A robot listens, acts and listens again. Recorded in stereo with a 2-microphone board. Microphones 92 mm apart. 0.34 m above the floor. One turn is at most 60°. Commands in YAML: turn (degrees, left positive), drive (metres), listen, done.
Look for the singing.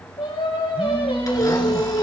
turn: 60
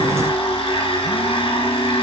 turn: 30
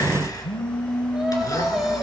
done: "Found it: singing, straight ahead, 2 to 4 m away."